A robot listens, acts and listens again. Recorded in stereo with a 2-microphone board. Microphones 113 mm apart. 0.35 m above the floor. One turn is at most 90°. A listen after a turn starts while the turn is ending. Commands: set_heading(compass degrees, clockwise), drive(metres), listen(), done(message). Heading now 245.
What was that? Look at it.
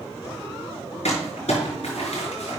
set_heading(175)
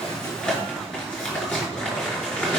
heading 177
set_heading(167)
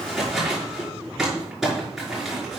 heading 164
done("Found it: crumpling, straight ahead, over 4 m away.")